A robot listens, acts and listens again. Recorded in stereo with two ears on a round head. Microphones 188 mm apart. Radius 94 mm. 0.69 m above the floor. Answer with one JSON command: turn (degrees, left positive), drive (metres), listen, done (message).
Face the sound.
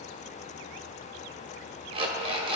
{"turn": -25}
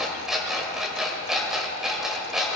{"done": "Facing the alarm clock, 1 to 2 m away."}